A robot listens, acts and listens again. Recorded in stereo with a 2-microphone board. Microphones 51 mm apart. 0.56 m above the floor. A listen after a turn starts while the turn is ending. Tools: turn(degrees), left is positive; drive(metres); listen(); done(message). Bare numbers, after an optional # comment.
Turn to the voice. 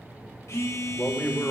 # The man speaking: about 30° left or 150° left.
turn(30)
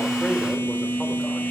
listen()
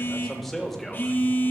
done("Facing the man speaking, 1 to 2 m away.")